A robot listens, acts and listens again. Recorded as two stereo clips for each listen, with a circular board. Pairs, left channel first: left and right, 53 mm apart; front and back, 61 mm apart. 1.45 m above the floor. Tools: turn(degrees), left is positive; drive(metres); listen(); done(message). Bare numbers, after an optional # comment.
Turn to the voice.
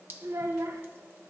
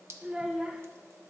# The child speaking: 100° right.
turn(-100)
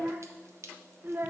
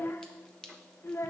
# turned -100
# The child speaking is now 45° right.
turn(-45)
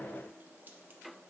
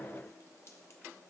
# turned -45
listen()
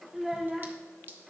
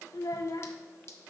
done("Facing the child speaking.")